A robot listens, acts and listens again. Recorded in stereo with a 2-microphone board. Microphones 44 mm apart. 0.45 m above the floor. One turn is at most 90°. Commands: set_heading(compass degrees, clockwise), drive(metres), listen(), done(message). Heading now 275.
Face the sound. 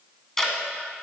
set_heading(245)
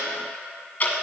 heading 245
set_heading(155)
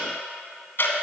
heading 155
set_heading(100)
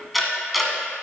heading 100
done("Found it: ticking, straight ahead.")